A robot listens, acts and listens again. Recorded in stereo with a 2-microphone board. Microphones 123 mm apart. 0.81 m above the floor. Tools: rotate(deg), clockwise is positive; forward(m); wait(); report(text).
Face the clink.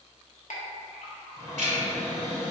rotate(-90)
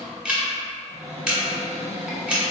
wait()
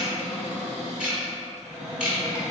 wait()
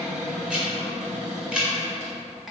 report("Found it: a clink, straight ahead, under 1 m away.")